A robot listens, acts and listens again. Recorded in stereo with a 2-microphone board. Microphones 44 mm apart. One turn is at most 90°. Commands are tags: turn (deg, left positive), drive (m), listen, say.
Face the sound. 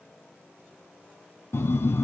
<turn deg="90"/>
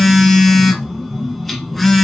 <say>Found it: a phone buzzing, straight ahead.</say>